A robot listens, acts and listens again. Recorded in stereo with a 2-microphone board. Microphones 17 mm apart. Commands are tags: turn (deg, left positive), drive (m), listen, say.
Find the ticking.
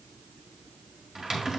<listen/>
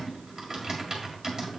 <listen/>
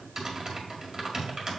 <say>I can't make out ticking, only typing on a keyboard.</say>